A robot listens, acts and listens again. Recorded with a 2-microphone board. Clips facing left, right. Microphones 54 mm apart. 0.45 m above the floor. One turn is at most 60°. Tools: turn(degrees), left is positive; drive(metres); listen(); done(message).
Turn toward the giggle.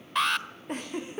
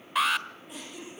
turn(degrees=50)
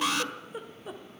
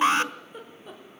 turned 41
turn(degrees=10)
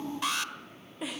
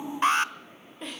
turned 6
done("Found it: a giggle, straight ahead.")